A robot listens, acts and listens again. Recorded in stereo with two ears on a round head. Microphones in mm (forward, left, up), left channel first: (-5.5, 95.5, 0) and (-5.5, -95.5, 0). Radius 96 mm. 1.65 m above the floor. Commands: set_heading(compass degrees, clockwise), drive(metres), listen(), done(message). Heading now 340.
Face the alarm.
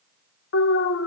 set_heading(275)
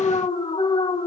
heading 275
set_heading(250)
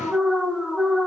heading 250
done("Found it: an alarm, straight ahead.")